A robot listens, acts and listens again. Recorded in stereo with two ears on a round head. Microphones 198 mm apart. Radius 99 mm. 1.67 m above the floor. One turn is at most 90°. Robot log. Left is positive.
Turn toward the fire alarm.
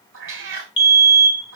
note: The fire alarm: about 60° left or 120° left.
cmd yaw +60
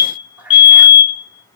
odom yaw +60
note: So it is at 60° left.
cmd yaw +60
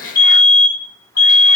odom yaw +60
note: The fire alarm is now 20° right.
cmd yaw -20
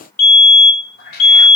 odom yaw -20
end: Found it: a fire alarm, straight ahead.